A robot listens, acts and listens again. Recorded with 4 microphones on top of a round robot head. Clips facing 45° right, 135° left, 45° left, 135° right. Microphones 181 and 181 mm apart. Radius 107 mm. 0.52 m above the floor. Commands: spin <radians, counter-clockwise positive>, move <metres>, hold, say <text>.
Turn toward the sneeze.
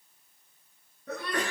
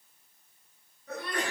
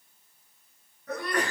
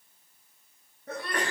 spin -1.31
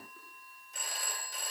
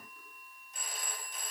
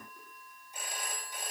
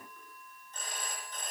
say Facing where the sneeze came from. I can't hear it now.